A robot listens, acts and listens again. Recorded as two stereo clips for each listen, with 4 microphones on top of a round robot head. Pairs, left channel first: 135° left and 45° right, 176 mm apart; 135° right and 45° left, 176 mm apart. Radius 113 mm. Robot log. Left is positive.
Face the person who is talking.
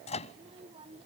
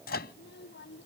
note: The child speaking: 110° right.
cmd yaw -110
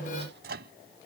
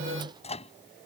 cmd idle
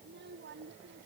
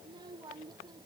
note: The child speaking is now 20° right.
cmd yaw -20
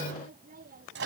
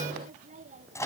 end: Facing the child speaking.